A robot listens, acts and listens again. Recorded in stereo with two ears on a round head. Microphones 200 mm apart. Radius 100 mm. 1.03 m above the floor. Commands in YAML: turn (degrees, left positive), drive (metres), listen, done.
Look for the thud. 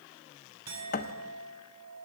turn: 45
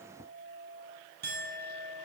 listen: true
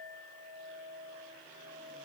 done: "I heard a thud, but can't make it out now. It was about straight ahead or 90° left."